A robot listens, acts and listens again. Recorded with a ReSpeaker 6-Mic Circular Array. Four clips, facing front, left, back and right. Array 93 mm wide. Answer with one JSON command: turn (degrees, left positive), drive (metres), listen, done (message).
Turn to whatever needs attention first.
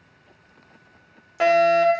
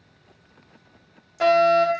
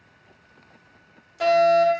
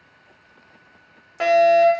{"turn": -35}
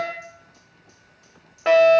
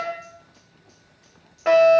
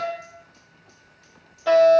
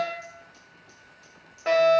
{"turn": 15}
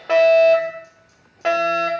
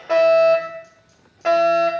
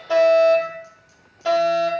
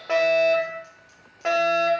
{"done": "Facing the fire alarm, 2 to 4 m away."}